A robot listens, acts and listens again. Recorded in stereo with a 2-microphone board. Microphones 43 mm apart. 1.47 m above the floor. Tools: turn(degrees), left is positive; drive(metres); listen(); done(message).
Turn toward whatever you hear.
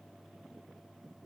listen()
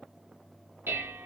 turn(degrees=-60)
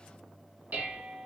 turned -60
turn(degrees=-50)
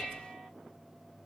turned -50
turn(degrees=-10)
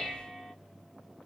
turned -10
done("Found it: dishes clattering, straight ahead, 1 to 2 m away.")